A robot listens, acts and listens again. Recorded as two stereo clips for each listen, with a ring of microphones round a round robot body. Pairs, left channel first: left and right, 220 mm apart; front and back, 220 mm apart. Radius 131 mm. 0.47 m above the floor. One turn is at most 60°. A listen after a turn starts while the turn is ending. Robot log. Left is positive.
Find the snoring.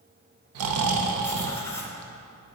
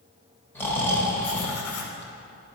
note: The snoring: 80° right.
cmd yaw -60
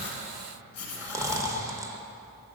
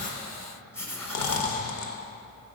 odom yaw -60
note: The snoring is now 15° right.
cmd yaw -15
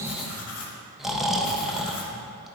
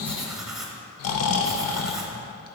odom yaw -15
end: Found it: snoring, straight ahead.